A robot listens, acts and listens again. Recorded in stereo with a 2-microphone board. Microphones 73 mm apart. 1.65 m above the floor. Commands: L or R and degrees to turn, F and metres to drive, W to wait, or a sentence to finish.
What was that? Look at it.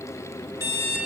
R55
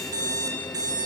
R70
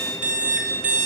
R15
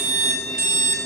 Facing the alarm clock, 2 to 4 m away.